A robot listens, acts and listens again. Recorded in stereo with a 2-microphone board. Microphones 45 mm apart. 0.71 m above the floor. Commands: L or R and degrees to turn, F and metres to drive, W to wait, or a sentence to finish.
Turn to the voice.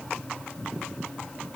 W
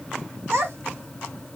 R65
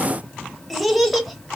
Facing the child speaking.